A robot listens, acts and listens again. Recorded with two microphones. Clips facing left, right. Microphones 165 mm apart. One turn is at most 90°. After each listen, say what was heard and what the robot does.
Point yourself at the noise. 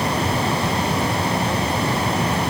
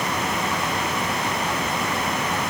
Keep listening.
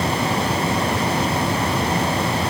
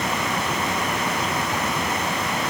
Keep listening.
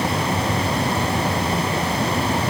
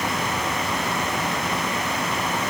I can't make out anything.